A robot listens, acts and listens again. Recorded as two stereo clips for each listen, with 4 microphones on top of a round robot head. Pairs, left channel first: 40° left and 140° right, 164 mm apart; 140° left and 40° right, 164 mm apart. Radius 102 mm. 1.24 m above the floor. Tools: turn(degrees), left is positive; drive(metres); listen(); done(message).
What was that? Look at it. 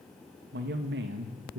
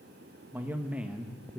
turn(degrees=-125)
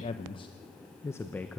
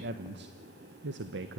turn(degrees=-45)
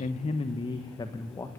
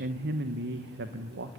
turn(degrees=-35)
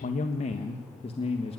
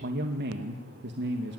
turn(degrees=-20)
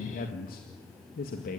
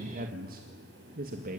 done("Facing the man speaking, 2 to 4 m away.")